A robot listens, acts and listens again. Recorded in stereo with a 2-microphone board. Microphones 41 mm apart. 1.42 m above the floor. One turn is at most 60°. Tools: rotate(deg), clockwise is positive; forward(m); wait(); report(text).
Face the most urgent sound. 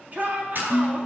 rotate(40)
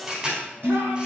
wait()
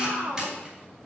rotate(60)
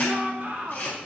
rotate(35)
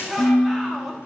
report("Facing the shout, 2 to 4 m away.")